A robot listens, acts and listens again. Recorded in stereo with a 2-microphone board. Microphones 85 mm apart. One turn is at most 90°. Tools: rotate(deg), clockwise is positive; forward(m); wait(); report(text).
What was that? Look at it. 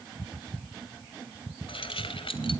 rotate(-90)
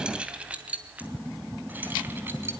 rotate(25)
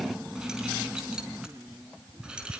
rotate(10)
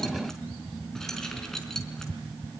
report("Facing the keys jangling, over 4 m away.")